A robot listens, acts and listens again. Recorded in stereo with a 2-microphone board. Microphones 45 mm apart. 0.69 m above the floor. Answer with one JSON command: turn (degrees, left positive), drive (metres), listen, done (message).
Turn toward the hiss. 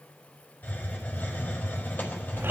{"turn": 40}
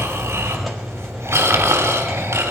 {"done": "Found it: a hiss, straight ahead."}